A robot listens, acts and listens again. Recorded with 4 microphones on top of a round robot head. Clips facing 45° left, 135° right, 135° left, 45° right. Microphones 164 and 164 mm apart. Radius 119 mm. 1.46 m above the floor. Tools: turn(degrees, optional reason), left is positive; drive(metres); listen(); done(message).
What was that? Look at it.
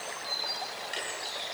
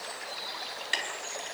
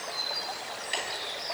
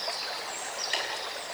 turn(degrees=-135, reason="The ticking: 135° right.")
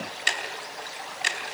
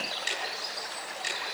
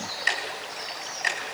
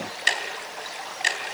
turn(degrees=15, reason="The ticking is now 15° left.")
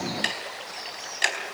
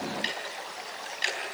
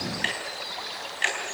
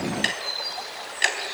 done("Facing the ticking, over 4 m away.")